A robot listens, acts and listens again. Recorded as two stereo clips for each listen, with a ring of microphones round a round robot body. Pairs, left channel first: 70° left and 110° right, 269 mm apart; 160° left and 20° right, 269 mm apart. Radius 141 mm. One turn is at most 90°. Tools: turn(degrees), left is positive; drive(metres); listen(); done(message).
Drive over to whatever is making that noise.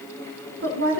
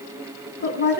turn(degrees=-90)
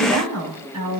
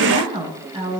turn(degrees=-90)
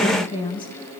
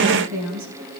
drive(metres=1.0)
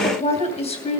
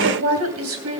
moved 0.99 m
drive(metres=1.0)
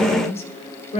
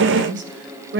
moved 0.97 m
turn(degrees=10)
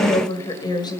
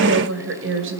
drive(metres=1.0)
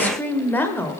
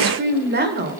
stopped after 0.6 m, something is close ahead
turn(degrees=-10)
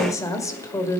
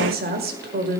done("I am next to the woman speaking.")